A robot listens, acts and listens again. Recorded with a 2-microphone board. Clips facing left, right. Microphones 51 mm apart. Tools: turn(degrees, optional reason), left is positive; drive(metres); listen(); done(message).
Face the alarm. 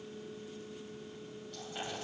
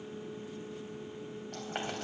listen()
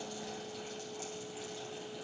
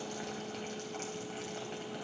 listen()
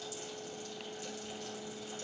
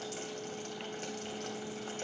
done("I can't make out an alarm.")